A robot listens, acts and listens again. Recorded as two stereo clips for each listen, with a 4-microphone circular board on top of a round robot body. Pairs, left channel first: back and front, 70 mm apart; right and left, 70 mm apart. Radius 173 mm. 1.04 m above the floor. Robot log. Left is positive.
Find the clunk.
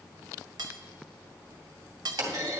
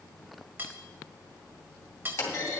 note: The clunk: 35° right.
cmd yaw -35
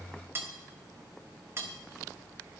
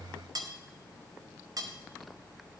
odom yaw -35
end: Facing where the clunk came from. I can't hear it now.